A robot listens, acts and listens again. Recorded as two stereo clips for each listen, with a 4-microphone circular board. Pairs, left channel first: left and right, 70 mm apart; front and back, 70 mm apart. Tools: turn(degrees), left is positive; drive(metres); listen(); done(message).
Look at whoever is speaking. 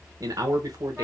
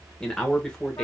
turn(degrees=-80)
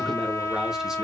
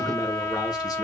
listen()
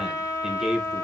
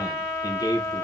done("Found it: a man speaking, straight ahead.")